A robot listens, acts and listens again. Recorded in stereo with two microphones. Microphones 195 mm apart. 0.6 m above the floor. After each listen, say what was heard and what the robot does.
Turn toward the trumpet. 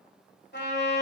The trumpet: about 70° left or 110° left. Turn 70° left.
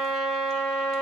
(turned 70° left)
Found it: a trumpet, straight ahead.